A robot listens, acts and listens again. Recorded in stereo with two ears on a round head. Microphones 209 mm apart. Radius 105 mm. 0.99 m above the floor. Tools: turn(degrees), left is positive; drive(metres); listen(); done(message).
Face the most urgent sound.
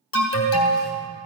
turn(degrees=60)
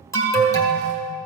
turn(degrees=15)
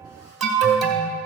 done("Facing the alarm.")